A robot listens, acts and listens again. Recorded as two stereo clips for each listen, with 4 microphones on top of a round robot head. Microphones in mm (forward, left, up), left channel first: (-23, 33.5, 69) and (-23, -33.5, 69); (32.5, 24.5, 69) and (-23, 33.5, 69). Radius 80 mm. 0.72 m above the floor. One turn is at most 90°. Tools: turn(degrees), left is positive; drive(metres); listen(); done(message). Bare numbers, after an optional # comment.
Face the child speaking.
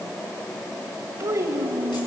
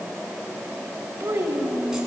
# The child speaking: 130° right.
turn(-90)
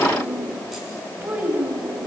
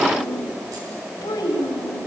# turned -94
# The child speaking is now 15° right.
turn(-15)
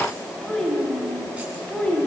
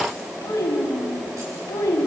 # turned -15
# The child speaking is now 15° left.
turn(15)
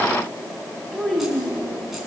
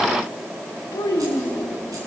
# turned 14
done("Found it: a child speaking, straight ahead.")